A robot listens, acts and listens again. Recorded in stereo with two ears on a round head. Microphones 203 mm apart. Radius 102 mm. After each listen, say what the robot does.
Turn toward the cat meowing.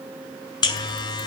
Keep listening.
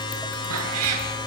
Turn 75° right.
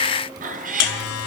Turn 35° right.
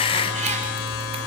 Keep listening.
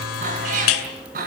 Turn 40° right.
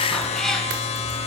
Found it: a cat meowing, straight ahead, 2 to 4 m away.